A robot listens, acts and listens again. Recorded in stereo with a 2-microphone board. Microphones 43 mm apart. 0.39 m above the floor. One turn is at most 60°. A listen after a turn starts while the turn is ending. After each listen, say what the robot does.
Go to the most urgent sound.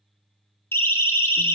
Turn 60° left.
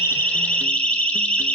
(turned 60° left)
Turn 30° left.
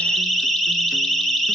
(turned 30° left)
Drive 1.0 m forward.
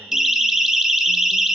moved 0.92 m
Turn 15° right.
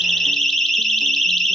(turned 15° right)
Drive 1.0 m forward.
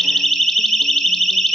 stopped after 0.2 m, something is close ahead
Arrived at the siren, straight ahead.